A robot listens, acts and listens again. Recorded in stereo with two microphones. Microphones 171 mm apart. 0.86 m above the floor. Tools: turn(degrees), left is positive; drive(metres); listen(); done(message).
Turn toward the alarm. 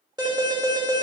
turn(degrees=-25)
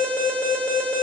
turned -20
turn(degrees=-10)
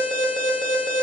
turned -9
done("Facing the alarm, 1 to 2 m away.")